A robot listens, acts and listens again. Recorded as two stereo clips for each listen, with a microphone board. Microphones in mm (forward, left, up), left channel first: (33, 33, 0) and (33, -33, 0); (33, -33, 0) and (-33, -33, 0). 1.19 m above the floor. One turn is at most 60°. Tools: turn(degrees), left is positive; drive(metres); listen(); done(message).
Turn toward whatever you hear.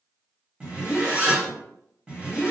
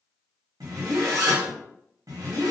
turn(degrees=-60)
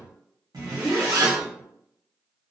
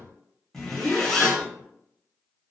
turn(degrees=-60)
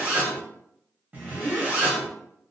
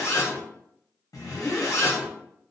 turn(degrees=-25)
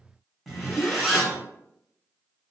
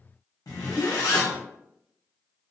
done("Found it: a zipper, straight ahead.")